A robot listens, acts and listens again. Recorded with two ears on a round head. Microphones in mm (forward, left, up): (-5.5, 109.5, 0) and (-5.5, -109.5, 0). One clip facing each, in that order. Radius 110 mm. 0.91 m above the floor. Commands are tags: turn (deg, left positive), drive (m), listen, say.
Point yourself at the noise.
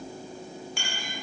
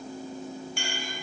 <turn deg="65"/>
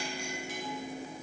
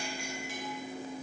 <listen/>
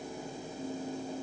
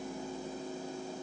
<listen/>
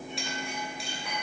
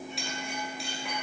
<say>Found it: a clink, straight ahead.</say>